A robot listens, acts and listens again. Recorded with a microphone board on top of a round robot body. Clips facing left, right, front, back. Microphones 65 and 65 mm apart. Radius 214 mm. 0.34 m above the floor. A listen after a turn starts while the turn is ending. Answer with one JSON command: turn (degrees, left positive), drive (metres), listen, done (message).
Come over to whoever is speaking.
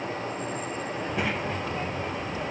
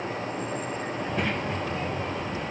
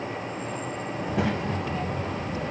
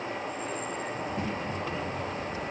{"drive": 1.0}
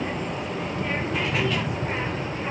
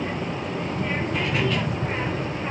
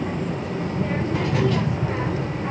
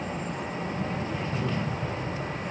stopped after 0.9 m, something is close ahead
{"done": "I am next to the child speaking."}